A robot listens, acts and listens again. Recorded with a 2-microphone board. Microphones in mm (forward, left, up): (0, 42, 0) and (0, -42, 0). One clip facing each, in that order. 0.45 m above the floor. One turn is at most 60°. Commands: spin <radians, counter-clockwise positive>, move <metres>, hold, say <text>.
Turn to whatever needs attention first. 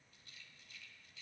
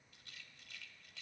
hold
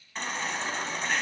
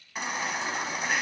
spin -0.52
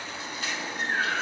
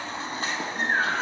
spin -1.05
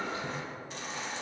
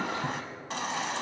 spin -1.05
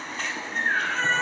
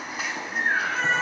spin -0.17
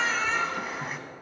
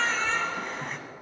say Found it: a baby crying, straight ahead.